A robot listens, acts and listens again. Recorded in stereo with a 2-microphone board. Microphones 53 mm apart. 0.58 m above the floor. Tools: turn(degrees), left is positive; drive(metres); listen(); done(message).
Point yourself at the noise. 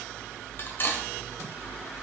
turn(degrees=45)
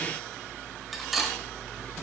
done("Found it: cutlery clinking, straight ahead, 1 to 2 m away.")